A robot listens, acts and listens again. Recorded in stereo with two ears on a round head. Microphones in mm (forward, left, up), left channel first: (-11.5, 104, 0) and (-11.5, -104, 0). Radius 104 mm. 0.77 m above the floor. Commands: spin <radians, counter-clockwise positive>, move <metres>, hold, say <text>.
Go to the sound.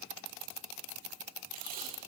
spin -0.61
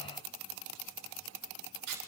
spin -1.92
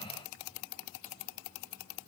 hold
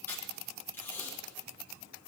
spin 0.17
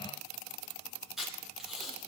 move 1.0
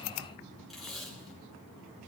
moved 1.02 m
move 1.0
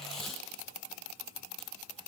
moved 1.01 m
move 1.0
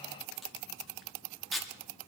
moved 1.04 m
move 1.0
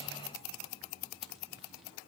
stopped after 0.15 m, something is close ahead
hold
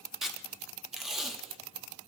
say I am next to the tape being pulled.